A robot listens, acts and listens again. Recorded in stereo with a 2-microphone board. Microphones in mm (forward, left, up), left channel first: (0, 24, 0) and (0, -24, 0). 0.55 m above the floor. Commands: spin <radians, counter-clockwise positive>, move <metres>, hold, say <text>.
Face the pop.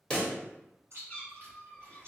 spin 0.35
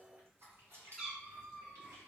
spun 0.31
hold
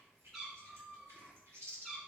say I heard a pop, but can't make it out now. It was about straight ahead or 145° left.